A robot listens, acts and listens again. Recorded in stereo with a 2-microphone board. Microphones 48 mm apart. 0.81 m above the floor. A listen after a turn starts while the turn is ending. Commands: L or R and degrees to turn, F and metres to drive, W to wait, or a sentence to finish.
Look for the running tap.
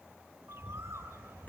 W
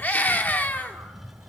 W
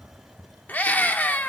I can't make out a running tap to turn to.